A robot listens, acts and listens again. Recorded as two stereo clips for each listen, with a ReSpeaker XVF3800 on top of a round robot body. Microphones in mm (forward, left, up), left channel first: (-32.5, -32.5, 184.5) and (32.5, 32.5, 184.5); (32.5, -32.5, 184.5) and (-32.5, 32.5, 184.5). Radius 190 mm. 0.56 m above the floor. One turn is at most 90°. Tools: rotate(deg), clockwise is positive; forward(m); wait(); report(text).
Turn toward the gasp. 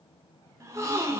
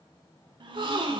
rotate(-90)
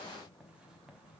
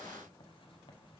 rotate(-15)
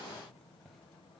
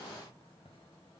report("Facing where the gasp came from. I can't hear it now.")